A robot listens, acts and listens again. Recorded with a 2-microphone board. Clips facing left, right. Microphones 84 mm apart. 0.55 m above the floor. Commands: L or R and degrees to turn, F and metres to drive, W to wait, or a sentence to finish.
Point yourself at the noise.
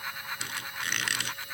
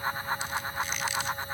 L90
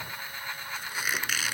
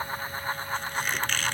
L10
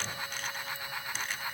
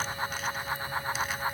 W
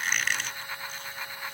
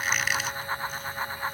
Facing the squeak.